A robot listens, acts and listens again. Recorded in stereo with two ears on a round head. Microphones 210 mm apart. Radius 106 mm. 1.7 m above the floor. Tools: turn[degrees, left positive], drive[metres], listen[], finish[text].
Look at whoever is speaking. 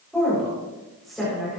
Action: turn[30]
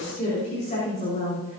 Thought: So it is at 145° left.
Action: turn[145]
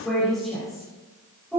Action: finish[Found it: a woman speaking, straight ahead.]